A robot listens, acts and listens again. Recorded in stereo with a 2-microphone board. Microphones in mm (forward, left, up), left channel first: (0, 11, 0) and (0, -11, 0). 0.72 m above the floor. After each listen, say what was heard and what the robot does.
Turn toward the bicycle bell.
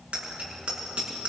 The bicycle bell: about 70° right or 110° right. Turn 70° right.
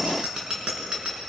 So it is at 40° right. Turn 40° right.
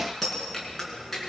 Found it: a bicycle bell, straight ahead, over 4 m away.